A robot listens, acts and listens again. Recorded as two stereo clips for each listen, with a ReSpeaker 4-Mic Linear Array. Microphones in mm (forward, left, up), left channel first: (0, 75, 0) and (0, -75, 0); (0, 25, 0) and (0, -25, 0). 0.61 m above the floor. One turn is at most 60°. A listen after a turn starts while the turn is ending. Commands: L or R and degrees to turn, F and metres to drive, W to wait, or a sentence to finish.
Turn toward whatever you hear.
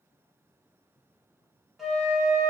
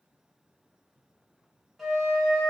L30
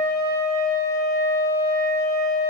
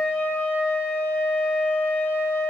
L60
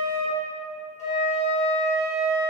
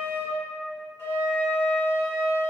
L60
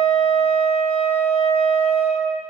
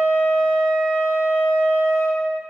L50
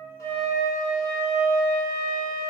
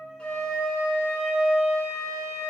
Facing the flute.